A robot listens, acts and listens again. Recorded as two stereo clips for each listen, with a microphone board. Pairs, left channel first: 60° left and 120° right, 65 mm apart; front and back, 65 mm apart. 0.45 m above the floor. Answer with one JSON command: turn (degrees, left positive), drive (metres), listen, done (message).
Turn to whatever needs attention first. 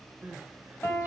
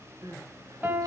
{"turn": 180}
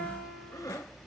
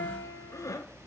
{"turn": 30}
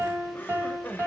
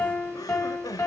{"done": "Found it: crying, straight ahead."}